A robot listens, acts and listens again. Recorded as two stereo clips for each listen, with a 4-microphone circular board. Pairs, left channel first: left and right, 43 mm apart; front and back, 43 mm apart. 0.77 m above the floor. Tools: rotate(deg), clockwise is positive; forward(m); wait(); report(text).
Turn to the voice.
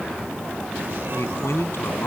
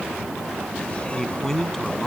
rotate(-80)
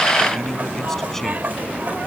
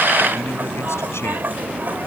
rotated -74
rotate(-10)
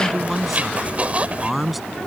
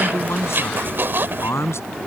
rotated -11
report("Found it: a man speaking, straight ahead.")